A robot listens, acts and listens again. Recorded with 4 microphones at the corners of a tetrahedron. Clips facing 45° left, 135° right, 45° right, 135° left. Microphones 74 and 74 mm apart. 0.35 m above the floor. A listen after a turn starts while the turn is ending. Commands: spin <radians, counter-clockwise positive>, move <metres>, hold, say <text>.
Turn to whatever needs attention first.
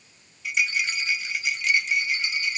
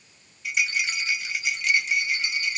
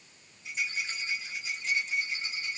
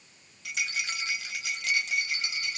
hold
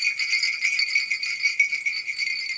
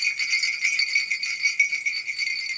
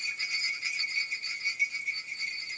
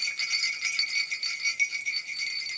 hold
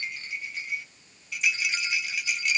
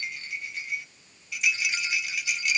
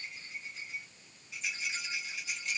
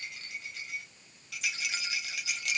say I can't make out anything urgent to turn to.